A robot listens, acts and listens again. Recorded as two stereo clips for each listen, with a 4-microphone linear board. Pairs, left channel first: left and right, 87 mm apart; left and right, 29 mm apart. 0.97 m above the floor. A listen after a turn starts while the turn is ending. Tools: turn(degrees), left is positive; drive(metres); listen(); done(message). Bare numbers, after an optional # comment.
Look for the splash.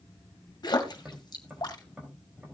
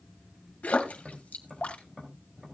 # The splash: about 50° left or 130° left.
turn(50)
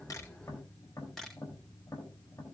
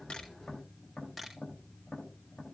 listen()
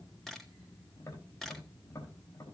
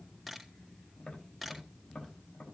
done("I heard a splash, but can't make it out now. It was about straight ahead or 80° left.")